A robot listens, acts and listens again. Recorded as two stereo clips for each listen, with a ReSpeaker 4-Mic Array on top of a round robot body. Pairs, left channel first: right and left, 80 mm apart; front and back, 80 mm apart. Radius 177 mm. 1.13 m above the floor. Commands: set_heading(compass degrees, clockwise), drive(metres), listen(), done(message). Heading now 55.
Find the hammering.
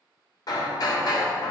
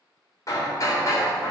set_heading(105)
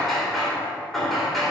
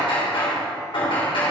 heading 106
done("Facing the hammering, 2 to 4 m away.")